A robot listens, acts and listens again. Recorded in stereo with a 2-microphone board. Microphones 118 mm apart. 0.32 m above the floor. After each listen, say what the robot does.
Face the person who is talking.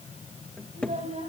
Turn 90° right.
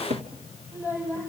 Turn 20° right.
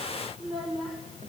Facing the child speaking.